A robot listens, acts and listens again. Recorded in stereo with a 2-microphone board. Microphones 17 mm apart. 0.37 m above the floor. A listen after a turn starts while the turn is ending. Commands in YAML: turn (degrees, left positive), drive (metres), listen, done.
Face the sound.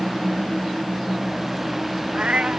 turn: -90
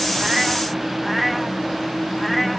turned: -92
done: "Facing the cat meowing."